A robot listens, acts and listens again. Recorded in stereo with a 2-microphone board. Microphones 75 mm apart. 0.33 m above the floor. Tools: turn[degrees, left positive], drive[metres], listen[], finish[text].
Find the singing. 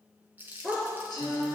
Thought: The singing: about 70° left or 110° left.
Action: turn[70]
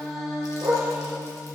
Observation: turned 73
Action: finish[Found it: singing, straight ahead.]